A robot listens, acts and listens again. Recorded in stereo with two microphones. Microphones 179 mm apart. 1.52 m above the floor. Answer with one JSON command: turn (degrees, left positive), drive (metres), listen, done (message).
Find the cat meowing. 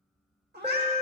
{"turn": -65}
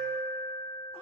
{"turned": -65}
{"listen": true}
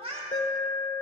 {"turn": -35}
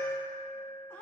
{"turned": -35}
{"turn": 15}
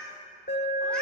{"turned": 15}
{"done": "Facing the cat meowing, 1 to 2 m away."}